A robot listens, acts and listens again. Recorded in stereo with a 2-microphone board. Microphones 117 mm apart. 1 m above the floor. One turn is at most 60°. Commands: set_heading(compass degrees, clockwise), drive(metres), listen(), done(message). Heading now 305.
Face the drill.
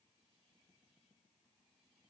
listen()
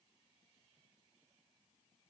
listen()
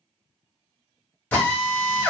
set_heading(275)
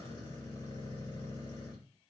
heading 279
listen()
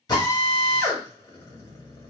set_heading(219)
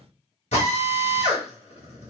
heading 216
set_heading(156)
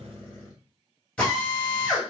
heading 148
set_heading(138)
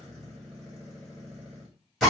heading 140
done("Facing the drill, 1 to 2 m away.")